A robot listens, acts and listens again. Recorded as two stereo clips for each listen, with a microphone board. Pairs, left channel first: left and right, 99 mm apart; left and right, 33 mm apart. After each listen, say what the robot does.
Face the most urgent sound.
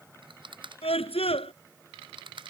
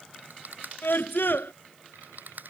Turn 90° left.
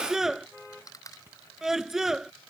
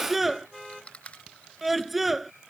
Facing the scream.